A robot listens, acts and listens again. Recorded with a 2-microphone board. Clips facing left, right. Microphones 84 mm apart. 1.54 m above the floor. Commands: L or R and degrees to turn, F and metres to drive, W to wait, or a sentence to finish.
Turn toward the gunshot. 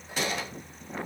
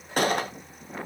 R55
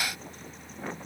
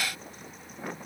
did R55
W
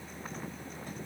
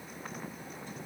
I heard a gunshot, but can't make it out now. It was about straight ahead or 70° right.